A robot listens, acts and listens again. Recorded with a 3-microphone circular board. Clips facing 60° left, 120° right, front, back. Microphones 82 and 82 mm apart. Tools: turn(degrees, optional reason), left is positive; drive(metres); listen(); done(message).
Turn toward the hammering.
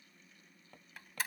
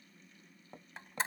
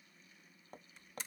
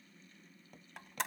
turn(degrees=-50, reason="The hammering: 50° right.")
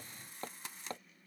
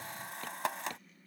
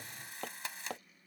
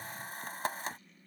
done("Facing the hammering.")